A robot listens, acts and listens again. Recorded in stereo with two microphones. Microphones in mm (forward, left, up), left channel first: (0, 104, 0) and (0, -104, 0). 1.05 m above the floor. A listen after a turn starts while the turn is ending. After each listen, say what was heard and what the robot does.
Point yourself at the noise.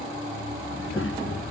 The child speaking: about 75° left or 105° left. Turn 75° left.
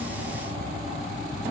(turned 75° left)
Keep listening.
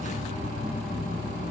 So it is at 35° left. Turn 35° left.
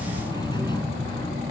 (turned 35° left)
The child speaking is now 20° left. Turn 20° left.
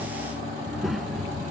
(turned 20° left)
Facing the child speaking.